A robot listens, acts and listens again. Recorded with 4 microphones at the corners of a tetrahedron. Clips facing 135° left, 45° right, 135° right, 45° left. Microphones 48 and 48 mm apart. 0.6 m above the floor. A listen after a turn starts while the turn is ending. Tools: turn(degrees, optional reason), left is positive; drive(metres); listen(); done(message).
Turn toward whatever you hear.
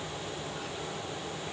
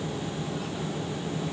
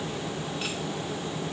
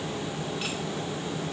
listen()
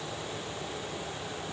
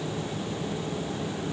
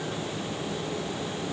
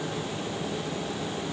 listen()
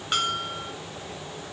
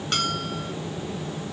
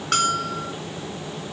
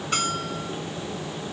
turn(degrees=-150, reason="The bell: 150° right.")
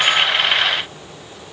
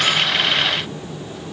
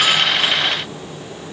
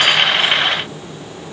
listen()
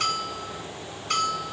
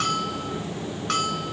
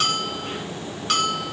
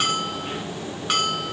turn(degrees=-35, reason="The bell is now 35° right.")
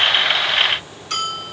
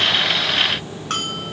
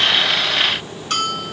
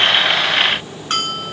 turn(degrees=-10, reason="The bell is now 10° right.")
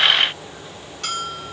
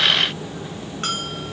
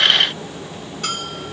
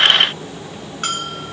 done("Found it: a bell, straight ahead.")